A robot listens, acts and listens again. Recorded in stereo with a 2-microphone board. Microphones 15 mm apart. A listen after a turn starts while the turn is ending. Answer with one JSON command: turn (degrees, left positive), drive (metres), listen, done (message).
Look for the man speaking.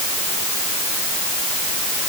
{"listen": true}
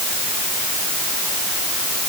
{"listen": true}
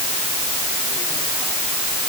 {"done": "I can't make out a man speaking."}